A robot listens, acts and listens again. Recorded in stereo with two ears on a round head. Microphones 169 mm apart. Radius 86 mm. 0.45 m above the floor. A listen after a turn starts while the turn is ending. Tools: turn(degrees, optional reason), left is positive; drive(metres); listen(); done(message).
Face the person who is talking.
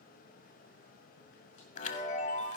listen()
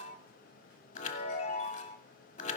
listen()
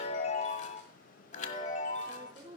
turn(degrees=-25, reason="The woman speaking: about 25° right or 155° right.")
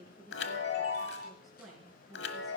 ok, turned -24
done("Found it: a woman speaking, straight ahead, over 4 m away.")